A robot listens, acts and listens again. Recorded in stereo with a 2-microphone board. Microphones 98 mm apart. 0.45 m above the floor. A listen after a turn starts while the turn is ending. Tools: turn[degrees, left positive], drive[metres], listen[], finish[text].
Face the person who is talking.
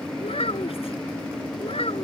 Action: turn[90]
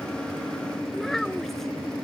Action: finish[Found it: a child speaking, straight ahead.]